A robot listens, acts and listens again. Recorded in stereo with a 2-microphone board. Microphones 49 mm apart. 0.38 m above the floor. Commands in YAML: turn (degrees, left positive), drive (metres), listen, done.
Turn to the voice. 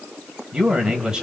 turn: -15
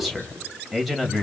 done: "Found it: a man speaking, straight ahead, 2 to 4 m away."